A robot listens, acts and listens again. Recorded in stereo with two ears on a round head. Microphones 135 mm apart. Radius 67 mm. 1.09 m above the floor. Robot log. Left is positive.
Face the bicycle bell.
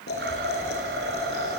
cmd idle
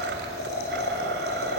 cmd idle
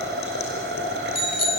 note: The bicycle bell: about 40° left or 140° left.
cmd yaw +40
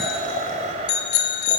note: So it is at 100° left.
cmd yaw +100
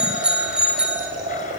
end: Found it: a bicycle bell, straight ahead, 2 to 4 m away.